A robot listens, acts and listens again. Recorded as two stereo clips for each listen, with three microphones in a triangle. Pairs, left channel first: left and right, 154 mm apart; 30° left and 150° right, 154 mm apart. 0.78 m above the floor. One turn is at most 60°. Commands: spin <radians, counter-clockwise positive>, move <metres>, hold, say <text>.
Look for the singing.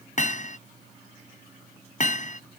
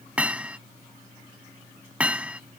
hold
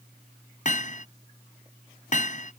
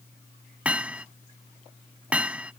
hold
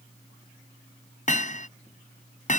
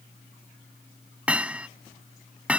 say I can't make out singing to turn to.